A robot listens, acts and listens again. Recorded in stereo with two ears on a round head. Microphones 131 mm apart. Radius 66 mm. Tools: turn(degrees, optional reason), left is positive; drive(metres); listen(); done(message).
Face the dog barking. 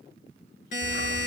turn(degrees=75, reason="The dog barking: about 75° left or 105° left.")
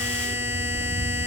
turn(degrees=15, reason="So it is at 15° left.")
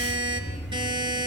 done("Facing the dog barking, 2 to 4 m away.")